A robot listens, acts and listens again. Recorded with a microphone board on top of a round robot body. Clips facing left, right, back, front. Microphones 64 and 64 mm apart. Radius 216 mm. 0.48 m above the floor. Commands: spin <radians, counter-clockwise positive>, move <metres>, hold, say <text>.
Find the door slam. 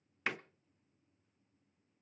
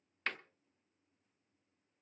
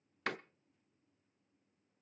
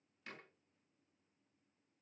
spin 2.97
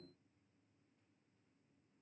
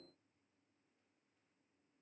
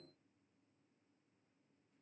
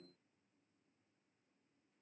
say I heard a door slam from this way, but can't make it out now.